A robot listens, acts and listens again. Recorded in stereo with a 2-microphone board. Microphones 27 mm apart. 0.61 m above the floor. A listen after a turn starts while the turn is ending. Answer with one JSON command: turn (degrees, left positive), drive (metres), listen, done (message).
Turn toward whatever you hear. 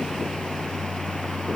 {"listen": true}
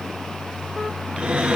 {"turn": -50}
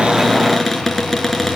{"done": "Facing the cupboard door, over 4 m away."}